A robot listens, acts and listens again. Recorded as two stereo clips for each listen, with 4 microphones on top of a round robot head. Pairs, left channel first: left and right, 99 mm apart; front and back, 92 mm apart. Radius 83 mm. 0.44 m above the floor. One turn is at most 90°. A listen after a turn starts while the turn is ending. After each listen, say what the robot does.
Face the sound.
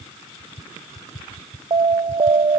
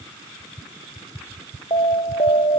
Turn 50° right.
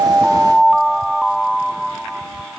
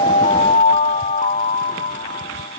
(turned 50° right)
Facing the alarm.